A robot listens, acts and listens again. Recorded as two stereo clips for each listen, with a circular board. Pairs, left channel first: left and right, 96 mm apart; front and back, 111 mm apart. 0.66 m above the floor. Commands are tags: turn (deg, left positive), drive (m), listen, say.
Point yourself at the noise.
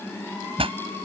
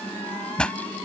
<turn deg="-80"/>
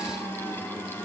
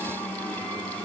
<say>Facing where the pop came from. I can't hear it now.</say>